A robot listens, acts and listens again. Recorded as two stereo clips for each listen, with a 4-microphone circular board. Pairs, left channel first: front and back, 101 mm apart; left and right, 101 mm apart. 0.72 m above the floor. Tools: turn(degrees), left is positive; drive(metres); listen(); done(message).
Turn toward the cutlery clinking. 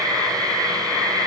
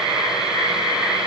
listen()
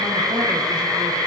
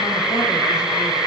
listen()
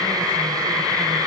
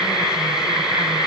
done("I can't make out cutlery clinking.")